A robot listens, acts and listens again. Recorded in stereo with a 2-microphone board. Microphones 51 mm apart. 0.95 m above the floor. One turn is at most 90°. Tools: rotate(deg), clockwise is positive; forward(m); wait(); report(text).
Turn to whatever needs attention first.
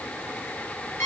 wait()
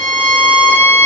wait()
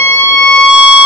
report("I can't make out anything urgent, only a violin.")